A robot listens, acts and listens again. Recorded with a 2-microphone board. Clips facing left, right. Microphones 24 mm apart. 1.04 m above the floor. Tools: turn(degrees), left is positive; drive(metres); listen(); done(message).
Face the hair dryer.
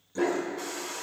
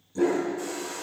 turn(degrees=45)
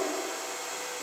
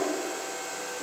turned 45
turn(degrees=80)
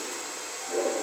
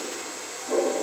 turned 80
done("Found it: a hair dryer, straight ahead.")